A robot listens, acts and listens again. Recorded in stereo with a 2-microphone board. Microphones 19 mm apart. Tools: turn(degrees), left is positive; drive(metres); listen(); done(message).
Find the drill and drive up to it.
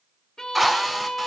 turn(degrees=-30)
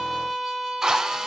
turn(degrees=-145)
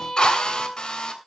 turn(degrees=45)
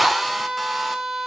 drive(metres=1.0)
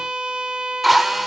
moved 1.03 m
drive(metres=1.0)
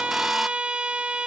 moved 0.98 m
listen()
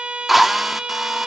turn(degrees=-10)
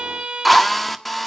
drive(metres=1.0)
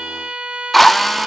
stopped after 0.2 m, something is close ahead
turn(degrees=10)
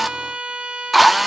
done("I am next to the drill.")